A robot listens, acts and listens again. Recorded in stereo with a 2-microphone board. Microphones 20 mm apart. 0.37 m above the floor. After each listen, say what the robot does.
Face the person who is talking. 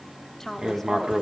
Turn 20° left.
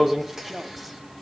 Facing the woman speaking.